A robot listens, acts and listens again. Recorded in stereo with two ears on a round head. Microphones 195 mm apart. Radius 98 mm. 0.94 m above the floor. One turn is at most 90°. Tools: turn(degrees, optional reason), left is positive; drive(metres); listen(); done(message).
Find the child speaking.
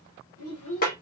turn(degrees=75, reason="The child speaking: about 75° left or 105° left.")
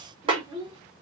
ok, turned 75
turn(degrees=-25, reason="So it is at 25° right.")
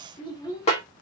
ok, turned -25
turn(degrees=15, reason="The child speaking is now 15° left.")
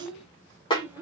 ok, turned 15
turn(degrees=-10, reason="The child speaking is now 10° right.")
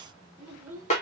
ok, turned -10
done("Facing the child speaking, 2 to 4 m away.")